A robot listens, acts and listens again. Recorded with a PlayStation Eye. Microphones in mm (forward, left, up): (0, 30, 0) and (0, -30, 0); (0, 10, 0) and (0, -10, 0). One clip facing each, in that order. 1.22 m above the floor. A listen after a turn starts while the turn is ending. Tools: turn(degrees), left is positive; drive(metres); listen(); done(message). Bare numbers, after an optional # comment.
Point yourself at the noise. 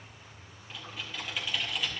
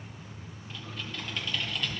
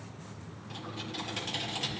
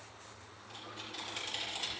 turn(30)
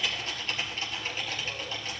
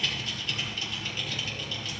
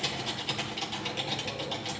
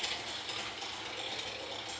# So it is at 145° left.
turn(145)
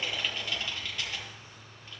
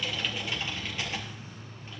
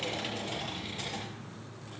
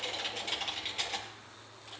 # The typing on a keyboard is now 25° right.
turn(-25)
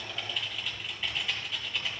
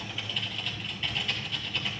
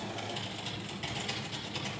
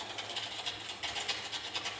done("Facing the typing on a keyboard.")